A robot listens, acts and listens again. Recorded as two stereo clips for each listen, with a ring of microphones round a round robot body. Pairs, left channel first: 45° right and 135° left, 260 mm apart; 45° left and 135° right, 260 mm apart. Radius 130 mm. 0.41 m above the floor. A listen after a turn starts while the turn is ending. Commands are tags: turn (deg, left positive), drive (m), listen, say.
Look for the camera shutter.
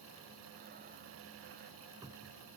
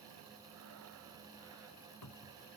<listen/>
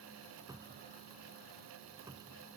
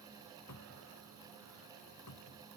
<listen/>
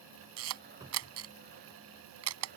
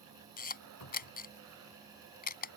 <turn deg="100"/>
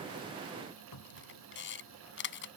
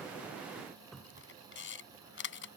<say>Found it: a camera shutter, straight ahead.</say>